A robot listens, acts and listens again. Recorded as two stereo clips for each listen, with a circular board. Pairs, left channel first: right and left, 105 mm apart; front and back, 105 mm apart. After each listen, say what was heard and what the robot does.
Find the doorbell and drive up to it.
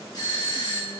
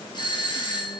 The doorbell: 40° right. Turn 40° right.
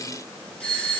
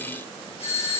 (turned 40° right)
The doorbell is now 10° right. Turn 10° right.
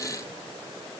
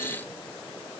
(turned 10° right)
Keep listening.
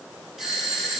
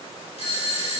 Drive 1.0 m forward.
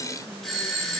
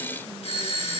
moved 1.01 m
Drive 1.0 m forward.
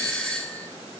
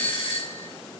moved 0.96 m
The doorbell is now 10° right. Turn 10° right.
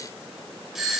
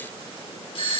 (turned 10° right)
Drive 1.0 m forward.
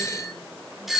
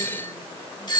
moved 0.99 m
Drive 1.0 m forward.
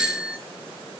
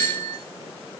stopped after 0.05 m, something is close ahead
The doorbell is now 15° left. Turn 15° left.
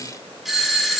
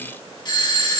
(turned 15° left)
I am next to the doorbell.